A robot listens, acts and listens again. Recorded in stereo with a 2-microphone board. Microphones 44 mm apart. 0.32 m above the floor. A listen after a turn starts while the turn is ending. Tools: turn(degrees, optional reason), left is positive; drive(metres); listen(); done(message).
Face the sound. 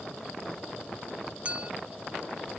turn(degrees=-30, reason="The clink: about 30° right or 150° right.")
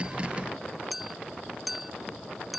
done("Facing the clink.")